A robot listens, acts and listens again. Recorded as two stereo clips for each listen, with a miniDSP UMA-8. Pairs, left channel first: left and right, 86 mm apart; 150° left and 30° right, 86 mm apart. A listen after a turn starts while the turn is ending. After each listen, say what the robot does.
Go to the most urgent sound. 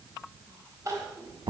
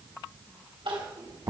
Turn 40° right.
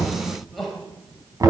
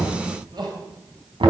Drive 1.0 m forward.
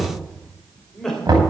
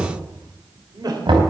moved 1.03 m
Drive 1.0 m forward.
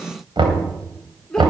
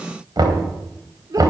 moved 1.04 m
Turn 10° left.
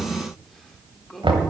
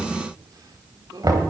Drive 1.0 m forward.
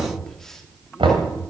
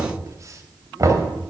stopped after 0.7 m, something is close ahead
Keep listening.
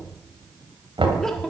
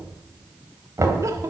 Keep listening.
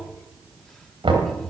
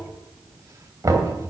Facing where the crying came from. I can't hear it now. I did not reach it.